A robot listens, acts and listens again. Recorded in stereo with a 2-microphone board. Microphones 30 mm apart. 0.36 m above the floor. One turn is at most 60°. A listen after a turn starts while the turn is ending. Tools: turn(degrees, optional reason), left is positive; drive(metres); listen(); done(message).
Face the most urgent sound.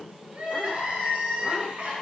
turn(degrees=-45, reason="The crying: about 45° right or 135° right.")
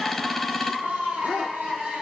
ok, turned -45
turn(degrees=-60, reason="So it is at 85° right.")
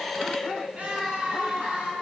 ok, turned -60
turn(degrees=-60, reason="The crying is now 65° right.")
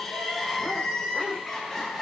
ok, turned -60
done("Facing the crying, over 4 m away.")